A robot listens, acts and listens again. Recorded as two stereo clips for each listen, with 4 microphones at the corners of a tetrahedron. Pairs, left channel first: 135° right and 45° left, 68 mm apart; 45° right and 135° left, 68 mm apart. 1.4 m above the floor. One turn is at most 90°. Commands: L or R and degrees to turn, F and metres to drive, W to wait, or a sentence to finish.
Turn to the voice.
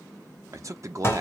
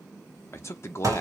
Found it: a man speaking, straight ahead, under 1 m away.